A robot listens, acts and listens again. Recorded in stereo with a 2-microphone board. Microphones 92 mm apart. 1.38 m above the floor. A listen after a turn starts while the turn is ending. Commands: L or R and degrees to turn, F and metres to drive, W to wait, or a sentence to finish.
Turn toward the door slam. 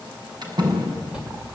R50
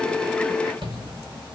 W
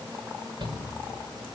I heard a door slam, but can't make it out now. It was about straight ahead or 80° right.